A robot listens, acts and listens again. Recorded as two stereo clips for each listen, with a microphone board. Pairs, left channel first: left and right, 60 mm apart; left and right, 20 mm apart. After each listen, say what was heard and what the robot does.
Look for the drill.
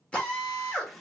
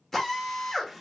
The drill: about 20° left or 160° left. Turn 20° left.
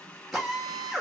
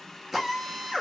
Facing the drill.